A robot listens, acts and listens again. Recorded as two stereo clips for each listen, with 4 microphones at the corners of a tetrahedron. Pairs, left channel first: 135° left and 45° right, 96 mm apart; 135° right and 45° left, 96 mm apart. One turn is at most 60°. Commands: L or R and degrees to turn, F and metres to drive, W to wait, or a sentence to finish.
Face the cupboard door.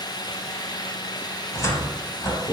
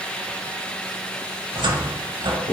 L60
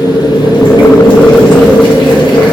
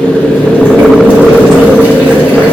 L20
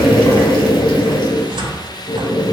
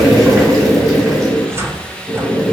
R15
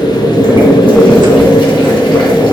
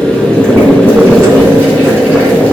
W
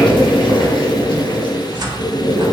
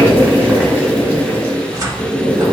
Facing the cupboard door, under 1 m away.